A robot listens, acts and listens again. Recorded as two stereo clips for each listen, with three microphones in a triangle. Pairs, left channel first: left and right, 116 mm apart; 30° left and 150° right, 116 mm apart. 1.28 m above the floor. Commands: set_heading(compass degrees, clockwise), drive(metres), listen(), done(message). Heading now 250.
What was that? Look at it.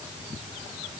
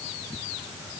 listen()
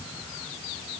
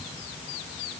listen()
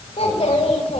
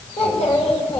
set_heading(195)
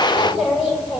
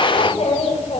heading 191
done("Found it: a child speaking, straight ahead.")